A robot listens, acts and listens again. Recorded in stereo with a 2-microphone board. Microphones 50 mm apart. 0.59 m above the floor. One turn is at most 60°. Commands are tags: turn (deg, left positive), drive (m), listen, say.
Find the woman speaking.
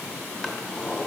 <listen/>
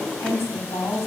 <turn deg="60"/>
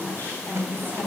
<turn deg="35"/>
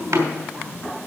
<turn deg="-15"/>
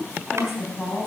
<say>Found it: a woman speaking, straight ahead, over 4 m away.</say>